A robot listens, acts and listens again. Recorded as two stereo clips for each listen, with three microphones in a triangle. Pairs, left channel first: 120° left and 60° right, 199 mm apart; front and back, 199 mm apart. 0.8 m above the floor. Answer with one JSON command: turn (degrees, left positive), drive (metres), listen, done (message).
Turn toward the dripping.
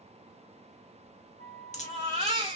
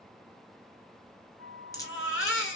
{"turn": 70}
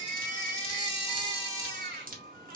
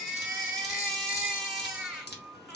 {"turn": -20}
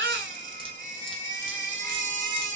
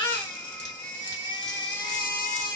{"listen": true}
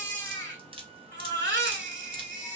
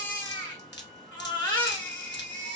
{"done": "Found it: dripping, straight ahead."}